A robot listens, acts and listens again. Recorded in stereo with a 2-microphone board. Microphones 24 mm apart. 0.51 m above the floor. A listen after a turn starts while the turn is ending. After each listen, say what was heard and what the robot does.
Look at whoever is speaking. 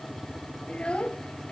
The child speaking: about 55° left or 125° left. Turn 55° left.
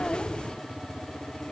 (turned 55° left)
Keep listening.
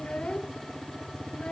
So it is at 70° left. Turn 70° left.
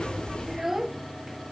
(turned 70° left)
The child speaking is now 10° right. Turn 10° right.
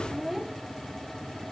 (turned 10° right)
Facing the child speaking.